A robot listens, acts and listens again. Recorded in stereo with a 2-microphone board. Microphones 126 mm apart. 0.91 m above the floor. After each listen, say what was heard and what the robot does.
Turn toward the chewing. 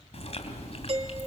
The chewing: about 50° left or 130° left. Turn 50° left.
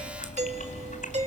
So it is at 80° left. Turn 80° left.
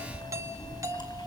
The chewing is now 35° left. Turn 35° left.
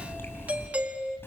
The chewing is now 20° left. Turn 20° left.
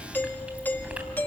The chewing is now 10° right. Turn 10° right.
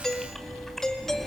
Found it: chewing, straight ahead.